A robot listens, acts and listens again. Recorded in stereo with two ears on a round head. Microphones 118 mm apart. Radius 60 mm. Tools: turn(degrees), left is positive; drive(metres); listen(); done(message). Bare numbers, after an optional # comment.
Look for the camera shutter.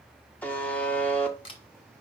# The camera shutter: about 40° left or 140° left.
turn(40)
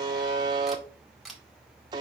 done("Facing the camera shutter.")